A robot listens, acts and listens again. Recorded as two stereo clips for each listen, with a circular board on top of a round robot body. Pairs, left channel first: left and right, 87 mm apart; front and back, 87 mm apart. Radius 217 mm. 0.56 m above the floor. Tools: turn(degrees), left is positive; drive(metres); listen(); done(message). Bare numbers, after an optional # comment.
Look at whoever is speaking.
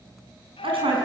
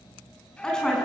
# The woman speaking: 80° right.
turn(-80)
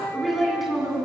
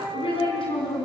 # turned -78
done("Found it: a woman speaking, straight ahead, over 4 m away.")